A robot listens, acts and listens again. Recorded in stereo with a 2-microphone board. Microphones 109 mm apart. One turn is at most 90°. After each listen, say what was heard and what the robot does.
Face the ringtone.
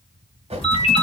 The ringtone: about 70° left or 110° left. Turn 70° left.
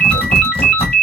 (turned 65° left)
So it is at 10° left. Turn 10° left.
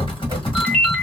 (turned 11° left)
Found it: a ringtone, straight ahead.